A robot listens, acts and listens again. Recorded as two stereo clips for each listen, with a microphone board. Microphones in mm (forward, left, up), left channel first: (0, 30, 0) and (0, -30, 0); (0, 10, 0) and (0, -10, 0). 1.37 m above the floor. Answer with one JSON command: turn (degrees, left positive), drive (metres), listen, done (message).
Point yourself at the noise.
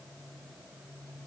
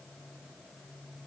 {"listen": true}
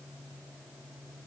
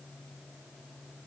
{"listen": true}
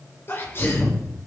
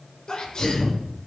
{"turn": 40}
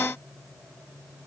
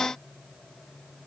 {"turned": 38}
{"listen": true}
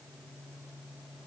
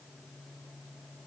{"done": "I heard a sneeze, but can't make it out now. It was about straight ahead or 100° left."}